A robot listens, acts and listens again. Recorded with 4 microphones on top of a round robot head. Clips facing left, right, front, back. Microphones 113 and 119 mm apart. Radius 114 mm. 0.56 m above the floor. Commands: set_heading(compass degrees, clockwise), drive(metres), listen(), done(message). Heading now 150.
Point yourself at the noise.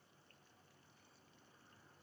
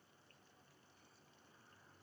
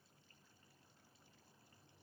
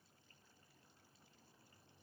listen()
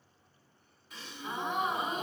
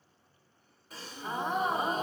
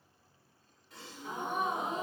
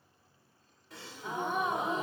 set_heading(295)
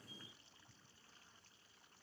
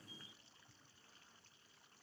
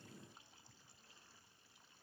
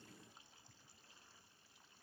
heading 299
done("Facing where the gasp came from. I can't hear it now.")